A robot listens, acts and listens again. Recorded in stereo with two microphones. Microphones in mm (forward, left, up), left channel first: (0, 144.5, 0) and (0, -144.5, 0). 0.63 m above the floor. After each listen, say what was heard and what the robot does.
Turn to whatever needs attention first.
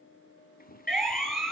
Turn 30° left.
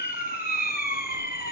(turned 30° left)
So it is at 150° left. Turn 150° left.
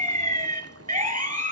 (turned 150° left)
The siren is now 25° right. Turn 25° right.
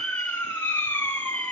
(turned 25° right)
Facing the siren.